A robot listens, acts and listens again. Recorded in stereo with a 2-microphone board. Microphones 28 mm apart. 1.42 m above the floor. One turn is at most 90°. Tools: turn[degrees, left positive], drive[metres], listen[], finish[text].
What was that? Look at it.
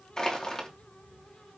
Thought: The crushing: about 20° left or 160° left.
Action: turn[20]
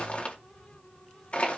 Thought: So it is at 140° left.
Action: turn[90]
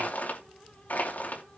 Thought: The crushing is now 75° left.
Action: turn[75]
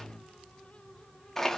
Thought: The crushing is now 15° left.
Action: turn[15]
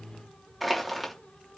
Action: finish[Found it: crushing, straight ahead.]